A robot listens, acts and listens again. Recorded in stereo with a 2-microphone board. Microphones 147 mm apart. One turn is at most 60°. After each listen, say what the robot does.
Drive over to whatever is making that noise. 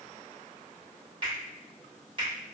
Turn 40° right.
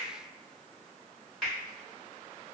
Drive 1.0 m forward.
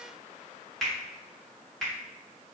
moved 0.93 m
Drive 1.0 m forward.
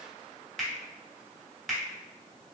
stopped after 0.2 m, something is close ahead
I am next to the finger snap.